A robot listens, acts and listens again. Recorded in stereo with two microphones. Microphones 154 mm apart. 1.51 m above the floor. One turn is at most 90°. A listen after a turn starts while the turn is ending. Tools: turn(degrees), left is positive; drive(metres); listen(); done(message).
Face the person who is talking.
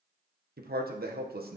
turn(degrees=-90)
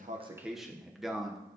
done("Found it: a man speaking, straight ahead.")